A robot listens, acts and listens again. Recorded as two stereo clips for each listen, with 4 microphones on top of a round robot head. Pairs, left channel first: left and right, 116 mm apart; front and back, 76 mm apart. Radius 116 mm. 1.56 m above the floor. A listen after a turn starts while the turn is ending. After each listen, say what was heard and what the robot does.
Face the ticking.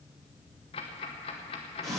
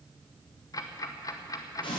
The ticking: 40° left. Turn 40° left.
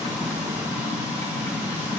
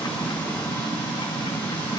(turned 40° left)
Keep listening.
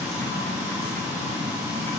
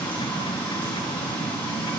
Keep listening.
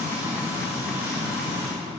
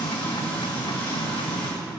Facing where the ticking came from. I can't hear it now.